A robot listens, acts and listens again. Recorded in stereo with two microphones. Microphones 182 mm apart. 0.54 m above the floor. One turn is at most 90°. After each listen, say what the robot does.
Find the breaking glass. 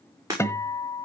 Turn 20° right.
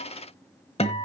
Keep listening.
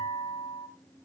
I heard breaking glass, but can't make it out now. It was about straight ahead or 140° right.